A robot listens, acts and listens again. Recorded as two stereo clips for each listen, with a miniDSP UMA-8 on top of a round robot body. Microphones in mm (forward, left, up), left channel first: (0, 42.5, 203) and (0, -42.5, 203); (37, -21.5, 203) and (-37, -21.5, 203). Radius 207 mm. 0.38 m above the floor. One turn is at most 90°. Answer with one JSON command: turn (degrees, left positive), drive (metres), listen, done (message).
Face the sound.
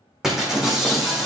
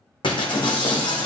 {"done": "Found it: breaking glass, straight ahead."}